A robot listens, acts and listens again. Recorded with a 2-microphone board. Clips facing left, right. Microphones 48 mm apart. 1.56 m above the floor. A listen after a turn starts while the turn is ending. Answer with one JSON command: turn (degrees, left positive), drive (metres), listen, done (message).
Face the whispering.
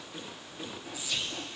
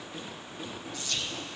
{"turn": 30}
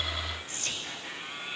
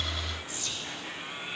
{"turn": 135}
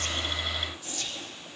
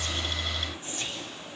{"turn": -30}
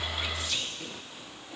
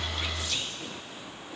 {"done": "Found it: whispering, straight ahead, 1 to 2 m away."}